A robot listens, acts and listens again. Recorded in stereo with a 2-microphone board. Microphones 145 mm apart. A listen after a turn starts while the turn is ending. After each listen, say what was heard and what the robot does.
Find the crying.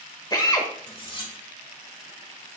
Keep listening.
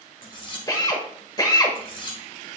Keep listening.
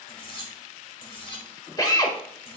I can't make out crying to turn to.